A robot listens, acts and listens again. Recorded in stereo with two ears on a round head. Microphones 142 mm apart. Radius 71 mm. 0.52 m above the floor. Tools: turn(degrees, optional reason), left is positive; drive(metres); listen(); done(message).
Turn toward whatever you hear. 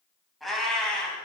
turn(degrees=30)
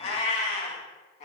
turn(degrees=130, reason="So it is at 130° left.")
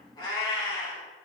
turn(degrees=25, reason="The cat meowing is now 25° left.")
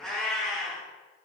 done("Found it: a cat meowing, straight ahead.")